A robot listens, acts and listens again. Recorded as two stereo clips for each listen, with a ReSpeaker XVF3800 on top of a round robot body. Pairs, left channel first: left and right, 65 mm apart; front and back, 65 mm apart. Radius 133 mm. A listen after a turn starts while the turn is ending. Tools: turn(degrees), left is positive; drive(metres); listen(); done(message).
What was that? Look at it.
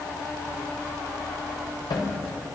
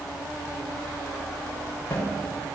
turn(degrees=65)
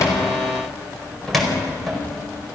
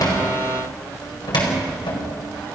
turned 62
done("Facing the cupboard door, over 4 m away.")